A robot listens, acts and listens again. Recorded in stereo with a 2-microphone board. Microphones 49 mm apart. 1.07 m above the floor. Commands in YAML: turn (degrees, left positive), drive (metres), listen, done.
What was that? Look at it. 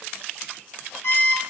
turn: 75
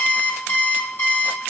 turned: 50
turn: 45
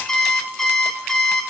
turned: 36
turn: 10
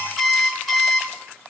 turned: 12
done: "Found it: an alarm clock, straight ahead, 1 to 2 m away."